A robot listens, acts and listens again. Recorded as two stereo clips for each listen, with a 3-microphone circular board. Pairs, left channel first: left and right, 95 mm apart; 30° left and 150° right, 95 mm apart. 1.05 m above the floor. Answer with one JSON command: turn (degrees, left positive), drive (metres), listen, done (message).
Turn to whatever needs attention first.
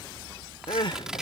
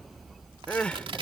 {"turn": 105}
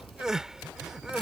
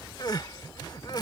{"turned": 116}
{"turn": -10}
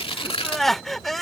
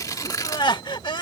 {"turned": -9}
{"done": "Facing the crying."}